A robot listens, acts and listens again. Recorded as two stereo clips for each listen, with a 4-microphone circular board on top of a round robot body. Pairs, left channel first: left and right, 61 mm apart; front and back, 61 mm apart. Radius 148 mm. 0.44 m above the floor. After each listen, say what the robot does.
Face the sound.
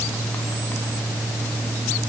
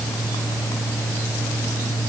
Keep listening.
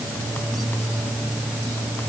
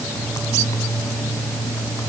Keep listening.
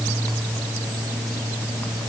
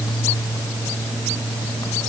I can't make out anything.